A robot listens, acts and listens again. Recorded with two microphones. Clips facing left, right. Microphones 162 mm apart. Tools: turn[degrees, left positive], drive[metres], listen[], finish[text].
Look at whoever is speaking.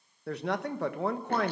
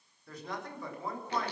Thought: The man speaking: about 70° left or 110° left.
Action: turn[70]
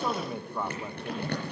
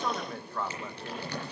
Thought: So it is at 15° left.
Action: turn[15]
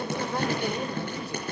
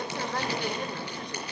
Action: finish[Facing the man speaking, 1 to 2 m away.]